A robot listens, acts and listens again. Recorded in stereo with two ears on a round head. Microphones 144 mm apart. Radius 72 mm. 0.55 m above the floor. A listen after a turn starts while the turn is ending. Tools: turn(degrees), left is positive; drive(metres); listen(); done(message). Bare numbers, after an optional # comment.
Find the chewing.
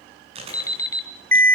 # The chewing: about 40° right or 140° right.
turn(-40)
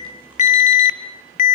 listen()
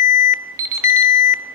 listen()
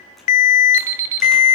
done("I heard chewing, but can't make it out now. It was about straight ahead or 100° right.")